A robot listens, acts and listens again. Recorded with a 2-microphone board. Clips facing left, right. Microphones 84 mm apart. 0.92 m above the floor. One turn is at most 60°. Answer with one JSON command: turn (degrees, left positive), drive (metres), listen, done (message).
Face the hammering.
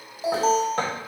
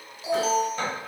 {"turn": 60}
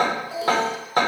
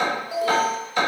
{"turn": 45}
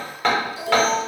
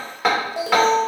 {"turn": -10}
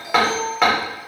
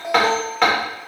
{"done": "Facing the hammering, 2 to 4 m away."}